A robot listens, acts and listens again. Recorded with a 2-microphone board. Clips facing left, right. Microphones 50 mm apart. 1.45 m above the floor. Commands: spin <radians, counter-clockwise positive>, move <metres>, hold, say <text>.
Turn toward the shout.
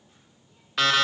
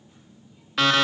hold
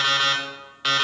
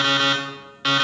hold
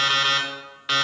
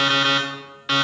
say I can't make out a shout, only an alarm clock.